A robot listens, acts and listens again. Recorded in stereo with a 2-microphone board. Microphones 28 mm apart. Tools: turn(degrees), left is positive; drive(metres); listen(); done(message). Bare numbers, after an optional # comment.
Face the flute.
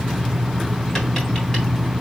listen()
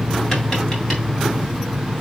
listen()
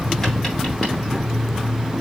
done("I can't make out a flute.")